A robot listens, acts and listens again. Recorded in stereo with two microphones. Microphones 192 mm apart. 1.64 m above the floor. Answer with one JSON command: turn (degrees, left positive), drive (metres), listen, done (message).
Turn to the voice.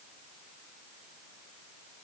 {"listen": true}
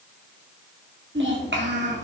{"turn": -70}
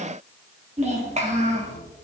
{"turn": -35}
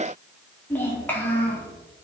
{"turn": 10}
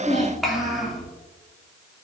{"done": "Found it: a child speaking, straight ahead, 2 to 4 m away."}